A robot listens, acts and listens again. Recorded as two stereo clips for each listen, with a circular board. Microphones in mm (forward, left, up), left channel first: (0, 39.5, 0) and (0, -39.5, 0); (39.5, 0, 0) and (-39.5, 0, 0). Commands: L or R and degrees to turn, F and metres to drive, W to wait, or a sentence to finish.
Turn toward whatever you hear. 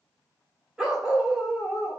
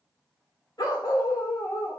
R10
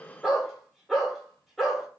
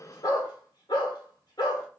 Found it: a dog barking, straight ahead.